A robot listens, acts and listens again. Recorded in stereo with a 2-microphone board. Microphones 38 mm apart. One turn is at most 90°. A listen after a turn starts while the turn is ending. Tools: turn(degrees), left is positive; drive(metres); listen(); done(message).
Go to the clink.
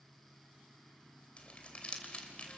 listen()
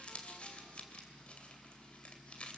listen()
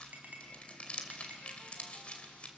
turn(degrees=-50)
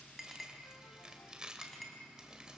drive(metres=1.0)
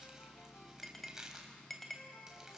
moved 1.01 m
drive(metres=1.0)
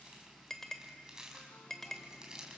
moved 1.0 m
turn(degrees=10)
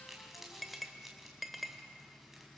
drive(metres=1.0)
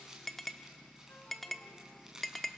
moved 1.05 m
drive(metres=1.0)
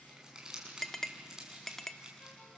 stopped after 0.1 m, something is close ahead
turn(degrees=10)
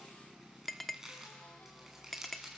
done("I am next to the clink.")